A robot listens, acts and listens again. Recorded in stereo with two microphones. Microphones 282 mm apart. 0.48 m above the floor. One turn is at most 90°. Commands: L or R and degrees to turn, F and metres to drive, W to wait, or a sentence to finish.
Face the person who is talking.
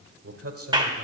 R55
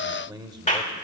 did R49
R15
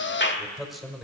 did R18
Found it: a man speaking, straight ahead.